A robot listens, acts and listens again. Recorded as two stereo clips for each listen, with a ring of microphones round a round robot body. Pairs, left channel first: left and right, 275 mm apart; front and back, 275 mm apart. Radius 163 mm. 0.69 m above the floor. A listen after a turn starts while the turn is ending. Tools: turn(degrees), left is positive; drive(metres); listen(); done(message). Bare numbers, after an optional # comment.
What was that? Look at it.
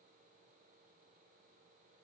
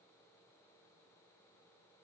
listen()
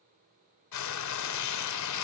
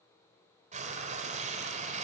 # The frying: 110° left.
turn(110)
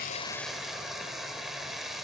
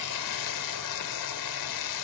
done("Facing the frying, 1 to 2 m away.")